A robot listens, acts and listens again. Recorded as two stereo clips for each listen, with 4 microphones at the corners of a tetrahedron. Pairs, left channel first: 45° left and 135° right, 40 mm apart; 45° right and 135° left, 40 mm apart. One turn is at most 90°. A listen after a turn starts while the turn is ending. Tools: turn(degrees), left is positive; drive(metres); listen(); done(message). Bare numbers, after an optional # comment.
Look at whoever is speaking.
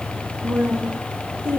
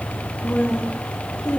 # The woman speaking: 105° right.
turn(-90)
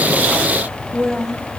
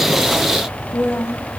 # The woman speaking is now 45° right.
turn(-45)
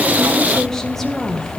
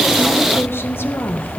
# The woman speaking is now 45° right.
turn(-45)
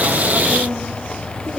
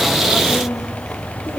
listen()
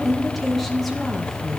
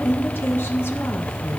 # The woman speaking is now 45° right.
turn(-45)
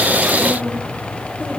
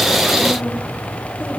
listen()
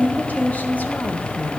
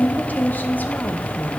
done("Facing the woman speaking.")